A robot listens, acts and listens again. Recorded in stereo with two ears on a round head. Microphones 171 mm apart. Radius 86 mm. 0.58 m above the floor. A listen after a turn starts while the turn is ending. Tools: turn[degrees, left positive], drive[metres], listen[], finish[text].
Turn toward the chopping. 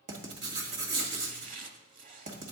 Thought: The chopping: about 40° right or 140° right.
Action: turn[-40]
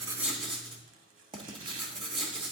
Thought: So it is at 100° right.
Action: turn[-100]
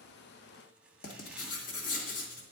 Action: listen[]
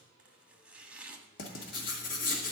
Action: finish[Facing the chopping.]